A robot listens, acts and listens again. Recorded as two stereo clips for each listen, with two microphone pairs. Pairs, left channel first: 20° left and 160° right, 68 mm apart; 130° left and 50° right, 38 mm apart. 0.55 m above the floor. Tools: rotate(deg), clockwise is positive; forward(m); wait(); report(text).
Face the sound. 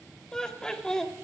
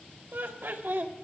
rotate(60)
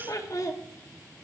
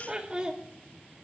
rotate(-10)
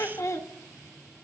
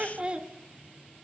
report("Found it: laughter, straight ahead.")